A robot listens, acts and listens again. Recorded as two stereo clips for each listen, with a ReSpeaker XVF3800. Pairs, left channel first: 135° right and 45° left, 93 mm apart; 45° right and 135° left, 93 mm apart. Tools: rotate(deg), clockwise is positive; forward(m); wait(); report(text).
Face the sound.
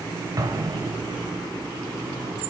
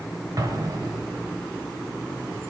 rotate(-90)
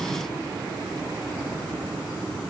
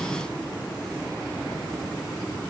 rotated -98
rotate(10)
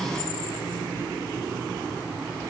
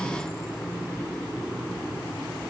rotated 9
report("I heard an explosion from this way, but can't make it out now.")